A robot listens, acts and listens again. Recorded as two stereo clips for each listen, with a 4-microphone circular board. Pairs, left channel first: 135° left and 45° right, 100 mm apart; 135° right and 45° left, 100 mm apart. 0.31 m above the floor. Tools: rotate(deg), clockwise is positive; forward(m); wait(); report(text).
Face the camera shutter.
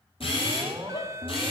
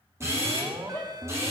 rotate(-110)
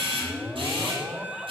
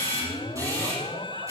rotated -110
rotate(10)
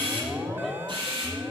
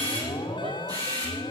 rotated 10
report("Found it: a camera shutter, straight ahead.")